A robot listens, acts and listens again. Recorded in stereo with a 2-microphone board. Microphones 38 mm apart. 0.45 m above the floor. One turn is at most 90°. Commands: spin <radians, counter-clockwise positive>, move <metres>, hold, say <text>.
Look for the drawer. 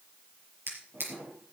spin -1.22
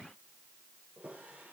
spin -0.70
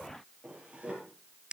spin -0.35
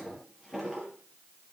say Found it: a drawer, straight ahead.